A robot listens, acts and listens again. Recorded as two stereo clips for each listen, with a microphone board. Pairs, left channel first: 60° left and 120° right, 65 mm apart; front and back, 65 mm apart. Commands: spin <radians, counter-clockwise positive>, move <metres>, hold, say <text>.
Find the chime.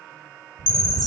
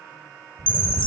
spin 1.22
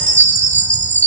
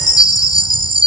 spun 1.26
say Facing the chime.